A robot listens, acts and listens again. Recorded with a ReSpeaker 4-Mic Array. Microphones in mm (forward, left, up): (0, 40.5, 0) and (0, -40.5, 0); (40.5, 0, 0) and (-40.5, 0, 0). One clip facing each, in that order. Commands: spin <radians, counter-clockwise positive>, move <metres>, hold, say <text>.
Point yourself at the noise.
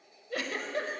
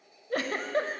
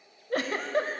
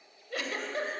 spin -0.79
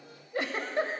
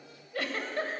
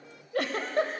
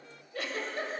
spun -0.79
spin 0.44
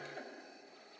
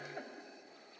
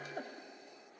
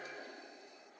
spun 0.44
spin -0.26
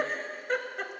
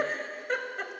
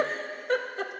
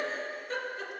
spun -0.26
say Found it: a giggle, straight ahead.